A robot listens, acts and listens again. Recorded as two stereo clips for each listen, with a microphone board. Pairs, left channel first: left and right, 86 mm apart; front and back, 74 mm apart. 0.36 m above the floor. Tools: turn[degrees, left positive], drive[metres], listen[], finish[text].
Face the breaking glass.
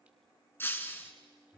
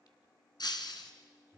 Thought: The breaking glass: 25° left.
Action: turn[25]
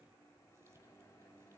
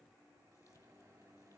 Action: finish[Facing where the breaking glass came from. I can't hear it now.]